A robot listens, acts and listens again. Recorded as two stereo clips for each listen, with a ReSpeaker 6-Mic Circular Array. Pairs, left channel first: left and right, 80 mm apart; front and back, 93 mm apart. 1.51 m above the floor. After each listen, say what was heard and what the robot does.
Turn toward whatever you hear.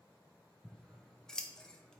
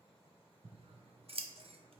The scissors: 175° left. Turn 175° left.
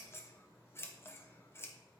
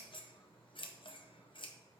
The scissors is now 30° left. Turn 30° left.
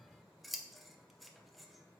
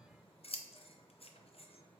Found it: scissors, straight ahead, under 1 m away.